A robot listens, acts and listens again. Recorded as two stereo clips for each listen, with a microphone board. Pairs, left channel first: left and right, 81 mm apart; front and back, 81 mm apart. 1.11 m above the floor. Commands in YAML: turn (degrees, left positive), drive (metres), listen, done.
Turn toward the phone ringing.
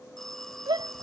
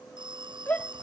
turn: 175
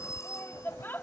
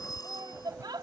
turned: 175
turn: 40
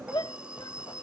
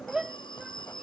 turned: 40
turn: -15
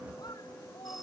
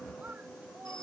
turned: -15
listen: true
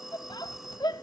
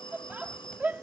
done: "Found it: a phone ringing, straight ahead."